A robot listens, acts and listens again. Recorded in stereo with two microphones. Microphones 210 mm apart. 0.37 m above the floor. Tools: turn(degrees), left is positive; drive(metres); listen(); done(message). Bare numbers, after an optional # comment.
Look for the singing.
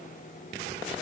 listen()
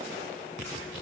listen()
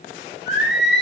# The singing: about 55° left or 125° left.
turn(55)
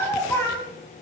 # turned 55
# So it is at 15° left.
turn(15)
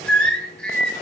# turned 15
done("Found it: singing, straight ahead.")